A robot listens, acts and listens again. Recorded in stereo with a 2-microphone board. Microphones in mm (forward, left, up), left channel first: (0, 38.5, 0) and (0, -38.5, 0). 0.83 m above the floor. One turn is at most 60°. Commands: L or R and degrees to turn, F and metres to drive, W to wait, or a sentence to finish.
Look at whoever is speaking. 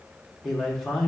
L30
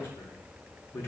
L60
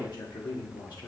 L60
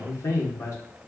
L45
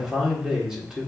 Facing the man speaking.